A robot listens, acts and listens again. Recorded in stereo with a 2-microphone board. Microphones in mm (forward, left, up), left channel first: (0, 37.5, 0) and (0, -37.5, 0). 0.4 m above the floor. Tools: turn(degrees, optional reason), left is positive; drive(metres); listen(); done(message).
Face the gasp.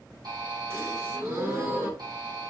turn(degrees=-40, reason="The gasp: about 40° right or 140° right.")
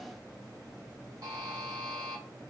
listen()
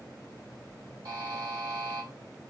done("I heard a gasp, but can't make it out now. It was about straight ahead or 100° right.")